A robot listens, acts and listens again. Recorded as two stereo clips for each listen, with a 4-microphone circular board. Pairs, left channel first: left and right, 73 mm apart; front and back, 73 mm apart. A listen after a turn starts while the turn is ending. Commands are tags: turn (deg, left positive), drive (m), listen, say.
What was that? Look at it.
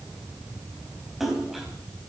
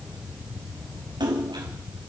<turn deg="180"/>
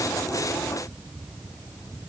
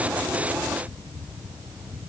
<say>Facing where the splash came from. I can't hear it now.</say>